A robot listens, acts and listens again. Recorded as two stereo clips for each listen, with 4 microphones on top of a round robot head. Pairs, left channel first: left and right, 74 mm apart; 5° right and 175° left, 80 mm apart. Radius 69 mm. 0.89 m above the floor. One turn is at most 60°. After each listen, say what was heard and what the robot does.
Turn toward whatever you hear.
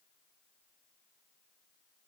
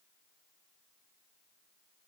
Keep listening.
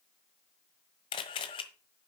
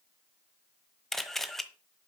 The camera shutter: 80° left. Turn 60° left.
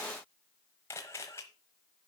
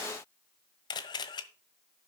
The camera shutter is now 25° left. Turn 25° left.
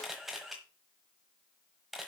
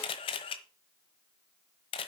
Facing the camera shutter, 1 to 2 m away.